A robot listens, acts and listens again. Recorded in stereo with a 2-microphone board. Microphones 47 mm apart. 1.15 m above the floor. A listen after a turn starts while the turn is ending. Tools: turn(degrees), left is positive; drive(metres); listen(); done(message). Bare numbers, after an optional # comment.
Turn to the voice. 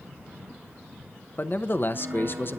# The man speaking: about 50° left or 130° left.
turn(50)
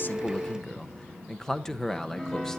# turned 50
# So it is at 10° left.
turn(10)
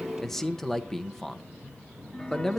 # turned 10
# The man speaking is now 10° left.
turn(10)
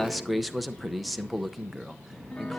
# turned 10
done("Facing the man speaking.")